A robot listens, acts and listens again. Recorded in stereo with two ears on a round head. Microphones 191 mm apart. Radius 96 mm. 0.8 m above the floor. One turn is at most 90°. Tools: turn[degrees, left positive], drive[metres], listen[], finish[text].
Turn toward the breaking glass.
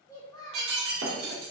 Thought: The breaking glass: about 55° right or 125° right.
Action: turn[-55]
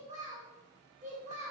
Action: listen[]
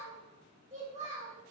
Action: finish[I heard breaking glass, but can't make it out now. It was about straight ahead or 70° right.]